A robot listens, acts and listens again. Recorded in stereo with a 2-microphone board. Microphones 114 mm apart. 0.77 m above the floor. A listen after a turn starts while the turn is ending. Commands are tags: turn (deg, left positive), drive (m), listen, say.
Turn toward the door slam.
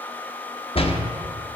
<turn deg="55"/>
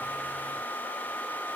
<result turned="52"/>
<listen/>
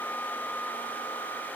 <say>I heard a door slam, but can't make it out now. It was about 5° left or 75° left.</say>